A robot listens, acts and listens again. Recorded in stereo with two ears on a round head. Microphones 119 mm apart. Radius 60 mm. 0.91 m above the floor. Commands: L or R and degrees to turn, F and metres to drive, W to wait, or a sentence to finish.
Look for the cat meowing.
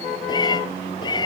L35
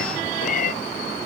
L115
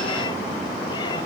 W
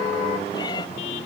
L30
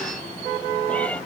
L10
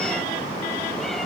W
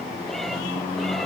W
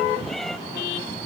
Found it: a cat meowing, straight ahead.